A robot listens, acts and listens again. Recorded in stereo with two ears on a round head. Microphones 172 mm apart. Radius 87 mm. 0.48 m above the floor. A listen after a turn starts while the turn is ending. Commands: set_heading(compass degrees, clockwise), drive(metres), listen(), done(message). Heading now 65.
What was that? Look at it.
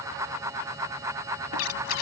set_heading(335)
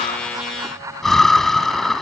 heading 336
done("Found it: breathing, straight ahead.")